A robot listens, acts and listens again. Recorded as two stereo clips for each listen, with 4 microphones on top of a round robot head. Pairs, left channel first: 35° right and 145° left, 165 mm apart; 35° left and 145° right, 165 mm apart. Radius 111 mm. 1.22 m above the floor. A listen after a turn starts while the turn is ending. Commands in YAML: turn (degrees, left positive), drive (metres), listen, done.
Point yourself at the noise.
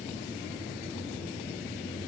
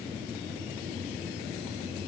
listen: true
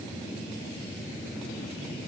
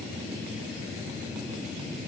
listen: true
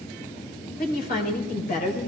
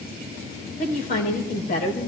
done: "Facing the woman speaking, over 4 m away."